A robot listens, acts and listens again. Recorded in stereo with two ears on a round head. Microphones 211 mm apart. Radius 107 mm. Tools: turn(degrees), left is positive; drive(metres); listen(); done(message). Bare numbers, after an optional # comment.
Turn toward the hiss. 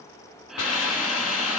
# The hiss: about 70° left or 110° left.
turn(70)
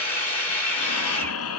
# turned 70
# So it is at 35° left.
turn(35)
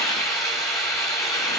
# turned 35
# The hiss is now 15° left.
turn(15)
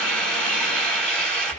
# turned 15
done("Found it: a hiss, straight ahead.")